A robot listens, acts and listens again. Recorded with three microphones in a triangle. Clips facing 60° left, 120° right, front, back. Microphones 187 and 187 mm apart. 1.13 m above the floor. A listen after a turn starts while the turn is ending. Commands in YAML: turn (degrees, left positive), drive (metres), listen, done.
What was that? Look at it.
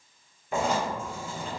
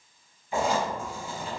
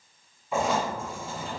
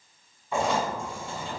turn: 85
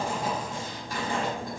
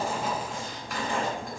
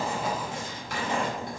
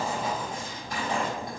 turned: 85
done: "Found it: writing, straight ahead."